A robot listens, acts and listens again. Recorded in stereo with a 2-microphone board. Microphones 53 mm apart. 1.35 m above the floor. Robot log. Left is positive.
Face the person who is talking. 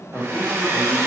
note: The man speaking: about 30° left or 150° left.
cmd yaw +30
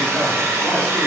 cmd idle
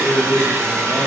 note: So it is at 120° left.
cmd yaw +120
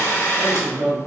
note: The man speaking is now 30° right.
cmd yaw -30
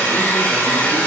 cmd idle
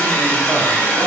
cmd idle
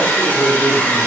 end: Found it: a man speaking, straight ahead, 1 to 2 m away.